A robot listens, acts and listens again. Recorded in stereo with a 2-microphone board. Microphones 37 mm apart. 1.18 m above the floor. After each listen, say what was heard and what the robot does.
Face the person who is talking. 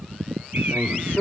Turn 90° left.
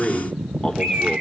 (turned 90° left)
So it is at 10° left. Turn 10° left.
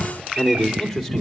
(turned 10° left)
Facing the man speaking.